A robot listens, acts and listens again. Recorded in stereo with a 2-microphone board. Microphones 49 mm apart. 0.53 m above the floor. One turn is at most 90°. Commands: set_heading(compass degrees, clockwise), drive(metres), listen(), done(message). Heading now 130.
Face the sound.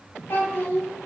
set_heading(90)
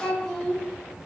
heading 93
done("Found it: a child speaking, straight ahead, 1 to 2 m away.")